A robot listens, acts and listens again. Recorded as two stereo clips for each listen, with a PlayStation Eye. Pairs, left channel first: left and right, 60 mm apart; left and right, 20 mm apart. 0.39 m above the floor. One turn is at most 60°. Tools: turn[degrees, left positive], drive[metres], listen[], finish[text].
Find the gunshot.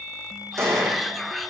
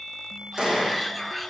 Thought: The gunshot: about 55° right or 125° right.
Action: turn[-55]
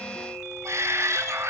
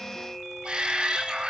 Action: listen[]
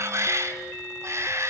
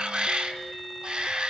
Action: finish[I heard a gunshot, but can't make it out now. It was about straight ahead or 70° right.]